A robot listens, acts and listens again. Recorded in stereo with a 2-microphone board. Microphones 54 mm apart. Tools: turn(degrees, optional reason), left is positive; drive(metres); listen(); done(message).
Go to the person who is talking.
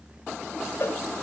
listen()
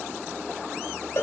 listen()
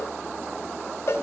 done("I can't make out anyone speaking, only a cowbell.")